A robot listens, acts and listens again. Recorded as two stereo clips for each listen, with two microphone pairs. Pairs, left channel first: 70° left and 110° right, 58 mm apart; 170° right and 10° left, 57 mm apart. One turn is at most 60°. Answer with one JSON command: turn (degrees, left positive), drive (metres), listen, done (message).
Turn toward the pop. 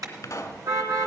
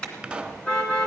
{"turn": 60}
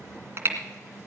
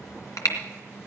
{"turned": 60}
{"turn": 25}
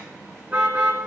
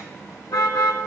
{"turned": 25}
{"done": "Facing where the pop came from. I can't hear it now."}